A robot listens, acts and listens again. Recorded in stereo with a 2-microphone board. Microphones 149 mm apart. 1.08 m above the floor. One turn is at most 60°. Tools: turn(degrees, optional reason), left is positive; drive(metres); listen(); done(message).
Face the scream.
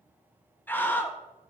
turn(degrees=30)
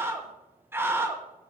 turn(degrees=-15, reason="So it is at 15° right.")
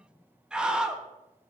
done("Found it: a scream, straight ahead.")